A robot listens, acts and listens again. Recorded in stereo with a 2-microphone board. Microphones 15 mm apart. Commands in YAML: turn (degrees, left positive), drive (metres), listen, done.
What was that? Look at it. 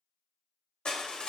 turn: 55
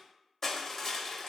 turn: 15
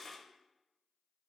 turn: 10
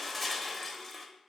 done: "Facing the crushing, under 1 m away."